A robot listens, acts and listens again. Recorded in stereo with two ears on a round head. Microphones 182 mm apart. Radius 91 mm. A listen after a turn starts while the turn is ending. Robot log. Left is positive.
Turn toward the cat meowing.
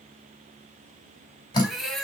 cmd yaw +30
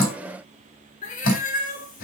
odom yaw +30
note: So it is at 130° left.
cmd yaw +130
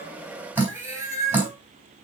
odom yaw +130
note: The cat meowing is now 15° right.
cmd yaw -15
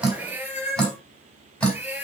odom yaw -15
end: Facing the cat meowing.